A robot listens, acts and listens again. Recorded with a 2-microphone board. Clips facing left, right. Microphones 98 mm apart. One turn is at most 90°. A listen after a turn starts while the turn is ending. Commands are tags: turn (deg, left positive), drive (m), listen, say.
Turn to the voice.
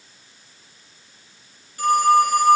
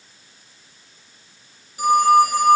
<listen/>
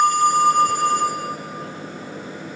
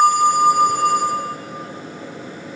<listen/>
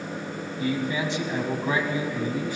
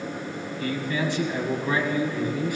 <turn deg="25"/>
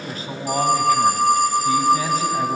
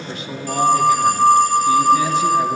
<turn deg="90"/>
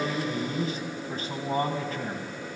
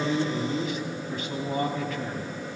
<turn deg="50"/>
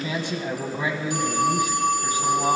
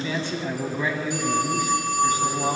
<turn deg="20"/>
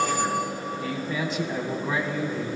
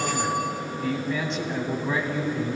<say>Facing the man speaking, 2 to 4 m away.</say>